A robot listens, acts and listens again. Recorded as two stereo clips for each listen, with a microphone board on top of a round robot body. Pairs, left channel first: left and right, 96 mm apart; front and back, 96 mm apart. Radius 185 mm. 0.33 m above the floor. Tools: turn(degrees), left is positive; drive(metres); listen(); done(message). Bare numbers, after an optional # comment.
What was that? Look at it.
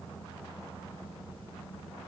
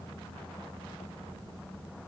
listen()
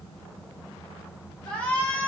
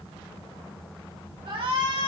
# The shout: 165° left.
turn(165)
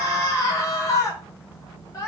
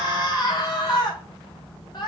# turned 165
# The shout is now 35° left.
turn(35)
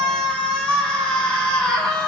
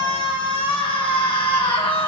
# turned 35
# The shout is now 10° left.
turn(10)
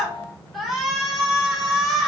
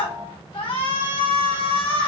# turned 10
done("Found it: a shout, straight ahead, 2 to 4 m away.")